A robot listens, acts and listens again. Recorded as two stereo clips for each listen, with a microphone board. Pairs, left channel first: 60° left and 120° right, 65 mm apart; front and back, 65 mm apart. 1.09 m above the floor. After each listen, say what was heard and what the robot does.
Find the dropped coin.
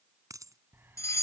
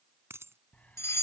The dropped coin: 135° right. Turn 135° right.
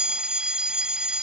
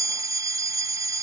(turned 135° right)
Facing where the dropped coin came from. I can't hear it now.